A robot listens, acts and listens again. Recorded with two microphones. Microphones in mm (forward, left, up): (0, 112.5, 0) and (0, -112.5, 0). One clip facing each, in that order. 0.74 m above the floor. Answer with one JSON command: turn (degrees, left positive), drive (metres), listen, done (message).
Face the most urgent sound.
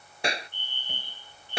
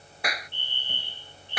{"turn": -70}
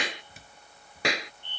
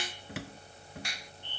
{"done": "Facing the fire alarm."}